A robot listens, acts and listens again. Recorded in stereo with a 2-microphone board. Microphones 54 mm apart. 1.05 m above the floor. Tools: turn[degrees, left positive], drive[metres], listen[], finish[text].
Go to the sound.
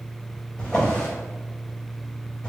Action: turn[30]
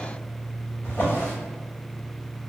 Thought: So it is at 135° left.
Action: turn[135]
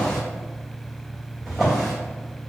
Action: drive[1.0]
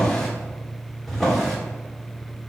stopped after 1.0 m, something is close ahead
Action: finish[I am next to the drawer.]